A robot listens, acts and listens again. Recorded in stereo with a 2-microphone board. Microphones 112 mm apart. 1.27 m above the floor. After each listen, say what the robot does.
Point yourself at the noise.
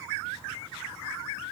Keep listening.
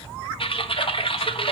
Turn 55° left.
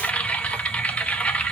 Turn 15° left.
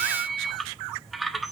Found it: typing on a keyboard, straight ahead.